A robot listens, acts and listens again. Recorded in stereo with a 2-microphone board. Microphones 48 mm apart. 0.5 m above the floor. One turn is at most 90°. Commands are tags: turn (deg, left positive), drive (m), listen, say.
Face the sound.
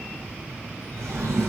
<turn deg="-90"/>
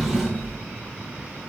<say>Facing the drawer.</say>